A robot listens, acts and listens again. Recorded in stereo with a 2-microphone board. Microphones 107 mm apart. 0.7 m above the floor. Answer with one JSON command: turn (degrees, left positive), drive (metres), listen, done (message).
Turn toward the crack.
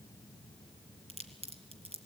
{"turn": -70}
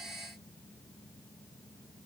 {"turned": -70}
{"listen": true}
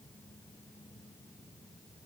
{"done": "I heard a crack, but can't make it out now. It was about straight ahead or 40° right."}